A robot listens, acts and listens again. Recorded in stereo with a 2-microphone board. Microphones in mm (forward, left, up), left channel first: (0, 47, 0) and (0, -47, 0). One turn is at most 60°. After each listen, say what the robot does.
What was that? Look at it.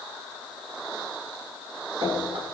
Turn 60° right.
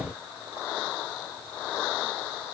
Turn 30° right.
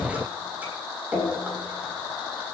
Turn 20° right.
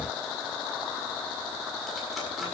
Keep listening.
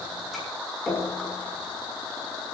Found it: dripping, straight ahead, over 4 m away.